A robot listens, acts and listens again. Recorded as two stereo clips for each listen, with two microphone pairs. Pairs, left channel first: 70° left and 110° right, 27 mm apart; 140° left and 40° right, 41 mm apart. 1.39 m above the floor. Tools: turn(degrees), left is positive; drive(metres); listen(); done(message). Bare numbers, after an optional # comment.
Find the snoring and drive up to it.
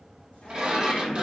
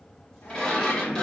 listen()
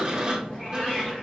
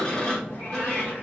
listen()
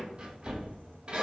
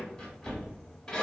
done("I can't make out snoring to turn to.")